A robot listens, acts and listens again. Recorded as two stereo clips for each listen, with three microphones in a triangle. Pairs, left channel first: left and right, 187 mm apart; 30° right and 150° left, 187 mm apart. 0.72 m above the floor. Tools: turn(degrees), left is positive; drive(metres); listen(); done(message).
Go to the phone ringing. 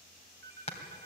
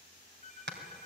turn(degrees=-80)
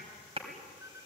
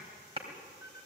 turn(degrees=-15)
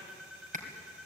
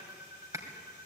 drive(metres=1.0)
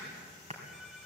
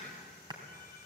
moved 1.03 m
drive(metres=1.0)
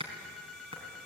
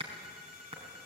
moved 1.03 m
drive(metres=1.0)
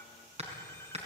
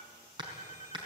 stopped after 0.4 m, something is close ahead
turn(degrees=15)
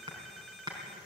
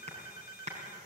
done("I am next to the phone ringing.")